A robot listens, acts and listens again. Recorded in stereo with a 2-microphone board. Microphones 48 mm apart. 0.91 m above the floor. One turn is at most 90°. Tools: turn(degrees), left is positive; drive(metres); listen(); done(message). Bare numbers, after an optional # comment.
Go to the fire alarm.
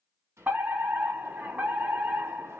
# The fire alarm: about 45° right or 135° right.
turn(-45)
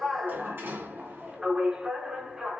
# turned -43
# So it is at 15° right.
turn(-15)
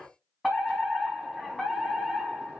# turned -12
drive(1.0)
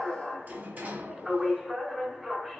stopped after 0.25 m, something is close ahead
done("Something is in my way. I am facing the fire alarm but have not reached it.")